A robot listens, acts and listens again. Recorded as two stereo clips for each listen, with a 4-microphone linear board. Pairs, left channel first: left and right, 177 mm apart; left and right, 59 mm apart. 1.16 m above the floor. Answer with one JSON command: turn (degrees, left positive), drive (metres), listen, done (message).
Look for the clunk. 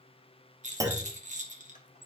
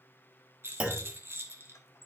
{"turn": -20}
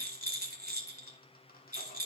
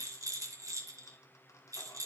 {"listen": true}
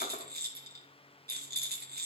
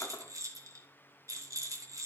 {"done": "I heard a clunk, but can't make it out now. It was about straight ahead or 140° right."}